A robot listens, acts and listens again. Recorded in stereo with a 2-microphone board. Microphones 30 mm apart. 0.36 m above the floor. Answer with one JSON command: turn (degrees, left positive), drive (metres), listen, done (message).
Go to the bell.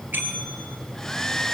{"turn": -90}
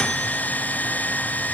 {"listen": true}
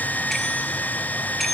{"drive": 1.0}
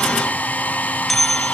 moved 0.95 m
{"drive": 1.0}
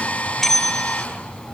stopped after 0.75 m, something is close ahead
{"turn": 10}
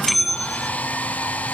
{"done": "Arrived at the bell, straight ahead."}